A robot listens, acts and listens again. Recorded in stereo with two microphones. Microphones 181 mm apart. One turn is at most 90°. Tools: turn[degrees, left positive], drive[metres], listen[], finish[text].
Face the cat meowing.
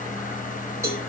Action: listen[]
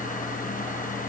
Action: listen[]
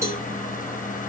Action: finish[I can't make out a cat meowing to turn to.]